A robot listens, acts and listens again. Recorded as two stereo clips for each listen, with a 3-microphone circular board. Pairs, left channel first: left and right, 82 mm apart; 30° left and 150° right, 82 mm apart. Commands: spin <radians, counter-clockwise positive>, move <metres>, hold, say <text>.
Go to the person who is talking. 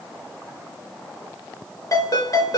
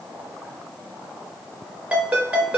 hold
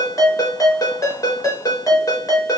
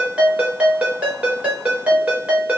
hold
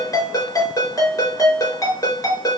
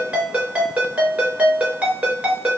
say I can't make out anyone speaking to turn to.